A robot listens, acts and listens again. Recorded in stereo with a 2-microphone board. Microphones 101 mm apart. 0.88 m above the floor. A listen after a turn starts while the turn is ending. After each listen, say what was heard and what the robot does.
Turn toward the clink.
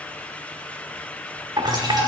The clink: about 50° right or 130° right. Turn 50° right.
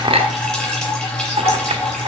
So it is at 85° right. Turn 85° right.
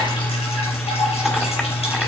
Keep listening.
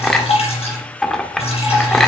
Facing the clink, 1 to 2 m away.